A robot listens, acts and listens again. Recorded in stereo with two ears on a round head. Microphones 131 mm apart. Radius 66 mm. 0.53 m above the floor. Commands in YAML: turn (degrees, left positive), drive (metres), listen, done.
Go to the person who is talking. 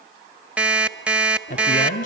turn: 60
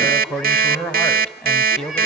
drive: 1.0
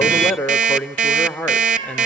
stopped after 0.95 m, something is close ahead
turn: 10
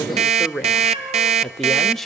done: "Arrived at the man speaking, straight ahead."